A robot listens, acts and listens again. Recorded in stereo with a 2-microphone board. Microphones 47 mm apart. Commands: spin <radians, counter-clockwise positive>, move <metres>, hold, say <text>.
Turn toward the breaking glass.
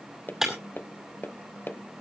spin -0.52
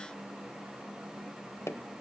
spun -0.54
hold
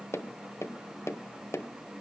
say I heard breaking glass, but can't make it out now. It was about 25° left or 140° right.